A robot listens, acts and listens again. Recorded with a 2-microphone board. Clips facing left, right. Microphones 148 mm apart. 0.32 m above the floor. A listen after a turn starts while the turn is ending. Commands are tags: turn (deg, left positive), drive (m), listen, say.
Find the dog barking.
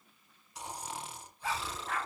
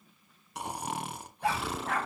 <turn deg="-90"/>
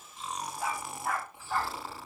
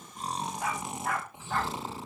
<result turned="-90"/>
<say>Found it: a dog barking, straight ahead.</say>